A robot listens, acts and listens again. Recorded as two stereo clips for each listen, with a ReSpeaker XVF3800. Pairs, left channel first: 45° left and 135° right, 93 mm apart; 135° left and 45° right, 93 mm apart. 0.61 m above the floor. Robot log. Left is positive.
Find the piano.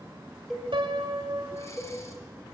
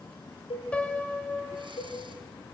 note: The piano: 150° right.
cmd yaw -150
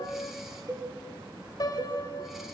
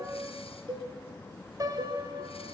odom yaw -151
end: Facing the piano.